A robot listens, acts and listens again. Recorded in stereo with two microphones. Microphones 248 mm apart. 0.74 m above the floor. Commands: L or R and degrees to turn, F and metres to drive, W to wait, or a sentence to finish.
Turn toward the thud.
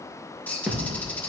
R30
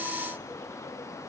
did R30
W
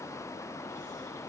I heard a thud, but can't make it out now. It was about 25° left or 145° right.